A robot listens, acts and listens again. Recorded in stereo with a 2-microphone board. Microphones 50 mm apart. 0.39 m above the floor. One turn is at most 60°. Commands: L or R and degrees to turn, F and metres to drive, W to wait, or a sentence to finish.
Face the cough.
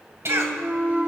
R60
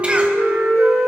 W
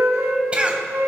R30
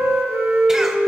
W
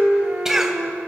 R10
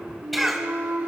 Facing the cough, 2 to 4 m away.